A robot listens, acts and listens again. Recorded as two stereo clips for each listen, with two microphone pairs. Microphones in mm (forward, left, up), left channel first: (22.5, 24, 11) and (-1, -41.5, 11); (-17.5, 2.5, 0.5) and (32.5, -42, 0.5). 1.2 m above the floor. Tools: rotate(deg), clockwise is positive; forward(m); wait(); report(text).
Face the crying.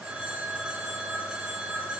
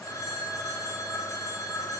wait()
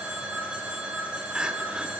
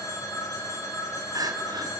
rotate(35)
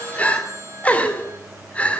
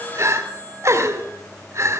report("Facing the crying, 2 to 4 m away.")